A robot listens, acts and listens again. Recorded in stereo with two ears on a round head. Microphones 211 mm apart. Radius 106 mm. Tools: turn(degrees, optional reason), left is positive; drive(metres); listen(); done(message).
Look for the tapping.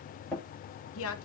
turn(degrees=30)
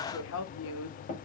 turn(degrees=145, reason="So it is at 145° left.")
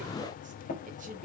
turn(degrees=40, reason="The tapping is now 40° left.")
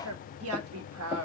listen()
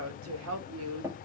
turn(degrees=-10, reason="The tapping is now 10° right.")
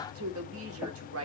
listen()
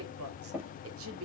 done("Found it: tapping, straight ahead.")